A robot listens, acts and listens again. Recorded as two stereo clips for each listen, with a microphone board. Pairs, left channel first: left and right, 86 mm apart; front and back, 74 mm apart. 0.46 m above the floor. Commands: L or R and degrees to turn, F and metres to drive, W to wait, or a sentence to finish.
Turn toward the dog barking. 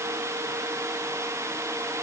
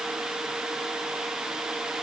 W
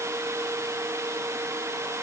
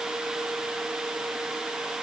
W
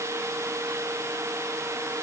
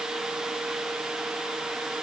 I can't make out a dog barking to turn to.